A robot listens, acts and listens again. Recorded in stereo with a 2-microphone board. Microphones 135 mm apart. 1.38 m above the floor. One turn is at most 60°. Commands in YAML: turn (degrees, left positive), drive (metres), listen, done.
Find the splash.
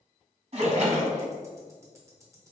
turn: -50
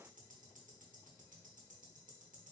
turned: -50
listen: true
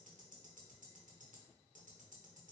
done: "I heard a splash, but can't make it out now. It was about straight ahead or 80° right."